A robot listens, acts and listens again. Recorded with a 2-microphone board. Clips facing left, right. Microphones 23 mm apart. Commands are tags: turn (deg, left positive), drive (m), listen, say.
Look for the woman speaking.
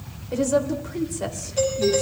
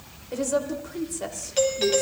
<turn deg="30"/>
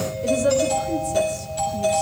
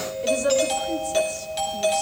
<turn deg="-20"/>
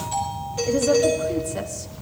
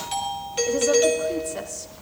<listen/>
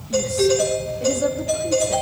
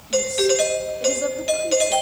<listen/>
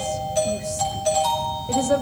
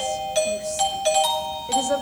<say>Found it: a woman speaking, straight ahead.</say>